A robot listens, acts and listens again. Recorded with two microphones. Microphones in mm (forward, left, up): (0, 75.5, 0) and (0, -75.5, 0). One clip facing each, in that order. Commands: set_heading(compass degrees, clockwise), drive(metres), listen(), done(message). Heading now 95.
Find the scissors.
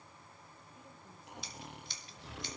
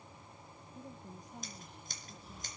set_heading(140)
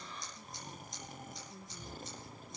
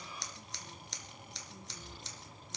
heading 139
set_heading(229)
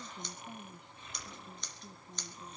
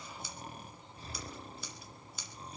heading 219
done("Facing the scissors.")